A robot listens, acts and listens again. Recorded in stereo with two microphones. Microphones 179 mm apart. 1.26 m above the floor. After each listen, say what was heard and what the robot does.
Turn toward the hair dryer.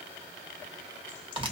Keep listening.
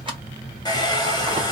The hair dryer: about 20° left or 160° left. Turn 20° left.
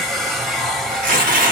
Found it: a hair dryer, straight ahead.